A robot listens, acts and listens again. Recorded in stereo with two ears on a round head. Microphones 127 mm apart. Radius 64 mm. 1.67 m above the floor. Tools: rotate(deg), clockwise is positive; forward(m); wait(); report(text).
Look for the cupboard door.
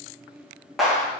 wait()
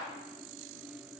wait()
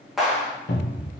rotate(-60)
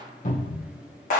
rotate(-55)
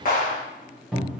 report("Facing the cupboard door.")